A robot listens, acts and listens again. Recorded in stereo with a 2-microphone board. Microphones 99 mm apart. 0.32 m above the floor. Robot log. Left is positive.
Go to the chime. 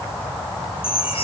note: The chime: about 70° left or 110° left.
cmd yaw +70
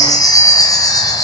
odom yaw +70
note: So it is at 40° left.
cmd yaw +40
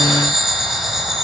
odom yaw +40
cmd fwd 1.0
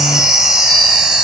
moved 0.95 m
note: The chime is now 10° right.
cmd yaw -10
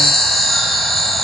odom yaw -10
cmd fwd 1.0
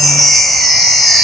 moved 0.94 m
cmd fwd 1.0
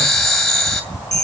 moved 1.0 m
cmd fwd 1.0
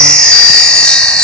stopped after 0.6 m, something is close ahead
note: The chime is now 10° left.
cmd yaw +10
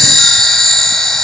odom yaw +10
end: I am next to the chime.